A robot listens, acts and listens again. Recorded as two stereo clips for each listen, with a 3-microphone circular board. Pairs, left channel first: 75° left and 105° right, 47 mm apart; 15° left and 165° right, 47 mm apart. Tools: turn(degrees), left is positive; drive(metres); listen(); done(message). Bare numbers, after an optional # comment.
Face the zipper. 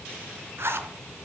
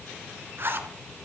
# The zipper: 130° right.
turn(-130)
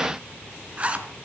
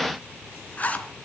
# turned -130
# The zipper is now 45° right.
turn(-45)
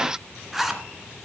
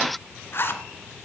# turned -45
# The zipper is now 20° right.
turn(-20)
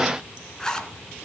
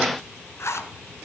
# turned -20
done("Found it: a zipper, straight ahead.")